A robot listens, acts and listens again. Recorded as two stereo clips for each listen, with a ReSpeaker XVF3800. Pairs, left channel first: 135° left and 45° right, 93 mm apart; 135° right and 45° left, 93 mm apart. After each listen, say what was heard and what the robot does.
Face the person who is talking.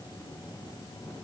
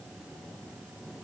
Keep listening.
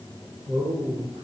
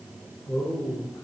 The man speaking: 80° right. Turn 80° right.
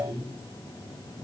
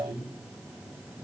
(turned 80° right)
Facing the man speaking, over 4 m away.